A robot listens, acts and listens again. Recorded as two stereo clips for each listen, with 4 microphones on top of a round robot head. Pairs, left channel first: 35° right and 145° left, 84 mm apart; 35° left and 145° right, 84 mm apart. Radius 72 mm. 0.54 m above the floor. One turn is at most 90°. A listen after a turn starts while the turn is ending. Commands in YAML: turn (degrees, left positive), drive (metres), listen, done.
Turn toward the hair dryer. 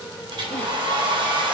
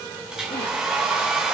turn: 90
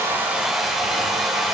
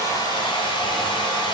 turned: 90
turn: 55
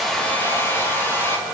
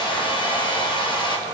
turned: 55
turn: 25
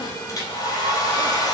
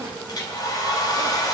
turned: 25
done: "Facing the hair dryer."